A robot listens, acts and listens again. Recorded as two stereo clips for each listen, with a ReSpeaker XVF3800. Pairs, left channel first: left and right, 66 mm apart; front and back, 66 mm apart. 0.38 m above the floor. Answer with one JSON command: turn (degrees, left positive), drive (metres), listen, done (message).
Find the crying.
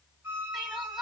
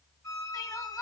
{"done": "Facing the crying."}